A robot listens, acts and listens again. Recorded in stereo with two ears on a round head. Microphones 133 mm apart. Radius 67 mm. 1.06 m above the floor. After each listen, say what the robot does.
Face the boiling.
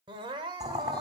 Turn 25° right.
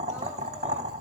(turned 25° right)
Turn 125° right.
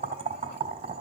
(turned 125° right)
Turn 45° right.
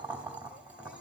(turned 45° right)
Turn 10° right.
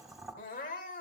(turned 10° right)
Found it: boiling, straight ahead.